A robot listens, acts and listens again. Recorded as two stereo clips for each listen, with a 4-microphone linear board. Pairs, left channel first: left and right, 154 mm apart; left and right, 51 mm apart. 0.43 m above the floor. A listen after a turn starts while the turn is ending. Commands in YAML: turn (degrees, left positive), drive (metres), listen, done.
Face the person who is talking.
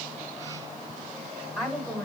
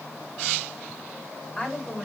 turn: -30
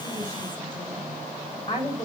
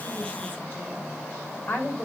turn: 30
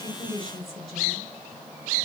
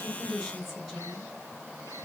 done: "Found it: a woman speaking, straight ahead."